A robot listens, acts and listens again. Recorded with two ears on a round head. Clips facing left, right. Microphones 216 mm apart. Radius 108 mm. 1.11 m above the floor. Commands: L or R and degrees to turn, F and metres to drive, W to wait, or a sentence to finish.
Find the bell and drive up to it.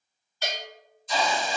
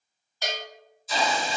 R40
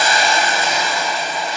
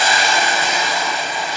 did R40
W
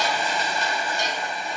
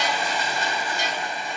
W
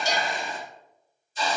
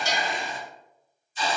R95
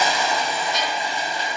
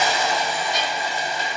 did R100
W
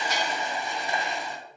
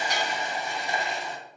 W
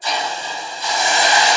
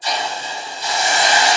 Facing where the bell came from. I can't hear it now. I did not reach it.